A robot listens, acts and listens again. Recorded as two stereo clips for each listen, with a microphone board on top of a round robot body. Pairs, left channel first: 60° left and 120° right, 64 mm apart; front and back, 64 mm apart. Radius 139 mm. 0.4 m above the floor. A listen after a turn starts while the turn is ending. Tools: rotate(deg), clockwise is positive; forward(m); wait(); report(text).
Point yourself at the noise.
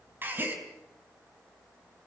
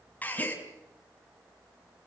rotate(65)
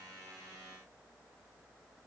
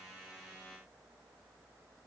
report("I heard a gasp from this way, but can't make it out now.")